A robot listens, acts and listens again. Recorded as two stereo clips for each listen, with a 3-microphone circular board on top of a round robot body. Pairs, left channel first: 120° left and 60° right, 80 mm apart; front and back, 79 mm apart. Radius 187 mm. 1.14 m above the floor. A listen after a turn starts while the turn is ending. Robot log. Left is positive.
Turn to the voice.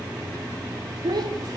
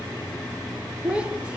note: The child speaking: 100° right.
cmd yaw -100
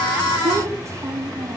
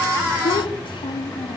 end: Found it: a child speaking, straight ahead, 2 to 4 m away.